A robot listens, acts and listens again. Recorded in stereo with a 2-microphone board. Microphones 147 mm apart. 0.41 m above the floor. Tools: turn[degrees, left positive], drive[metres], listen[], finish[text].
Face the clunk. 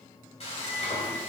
Action: listen[]
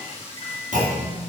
Thought: The clunk: about 60° right or 120° right.
Action: turn[-60]
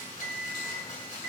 Action: listen[]
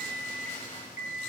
Action: finish[I heard a clunk, but can't make it out now. It was about straight ahead or 60° right.]